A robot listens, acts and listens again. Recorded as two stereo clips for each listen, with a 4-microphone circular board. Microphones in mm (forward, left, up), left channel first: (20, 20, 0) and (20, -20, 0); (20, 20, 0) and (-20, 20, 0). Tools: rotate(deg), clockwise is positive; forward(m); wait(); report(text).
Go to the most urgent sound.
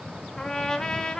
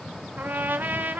wait()
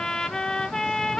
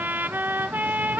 wait()
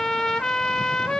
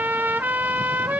report("I can't make out anything urgent, only a trumpet.")